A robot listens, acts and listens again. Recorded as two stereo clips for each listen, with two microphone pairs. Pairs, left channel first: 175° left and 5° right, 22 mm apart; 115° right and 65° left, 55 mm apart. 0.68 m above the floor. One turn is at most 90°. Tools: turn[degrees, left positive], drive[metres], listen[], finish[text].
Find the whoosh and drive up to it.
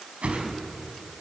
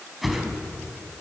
Thought: The whoosh: 25° right.
Action: turn[-25]
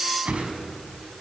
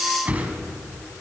Action: drive[1.0]
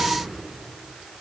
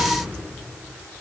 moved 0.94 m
Action: listen[]
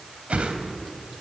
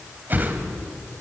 Thought: The whoosh is now 10° left.
Action: turn[10]
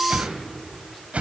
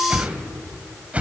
Action: drive[1.0]
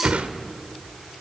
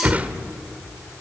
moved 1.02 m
Action: drive[1.0]
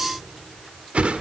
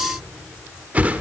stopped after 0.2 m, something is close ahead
Action: finish[I am next to the whoosh.]